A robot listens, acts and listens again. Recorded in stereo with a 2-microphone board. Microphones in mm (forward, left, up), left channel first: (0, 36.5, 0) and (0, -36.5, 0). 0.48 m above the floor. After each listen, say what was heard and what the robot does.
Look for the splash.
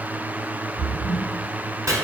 The splash: about 15° right or 165° right. Turn 15° right.
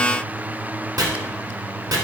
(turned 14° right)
Keep listening.
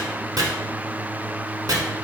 I heard a splash, but can't make it out now. It was about 5° right or 150° right.